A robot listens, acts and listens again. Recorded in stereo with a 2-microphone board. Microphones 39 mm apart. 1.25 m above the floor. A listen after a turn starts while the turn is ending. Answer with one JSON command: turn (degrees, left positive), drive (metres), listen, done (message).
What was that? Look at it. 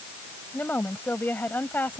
{"turn": 50}
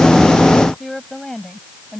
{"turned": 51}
{"done": "Found it: a woman speaking, straight ahead."}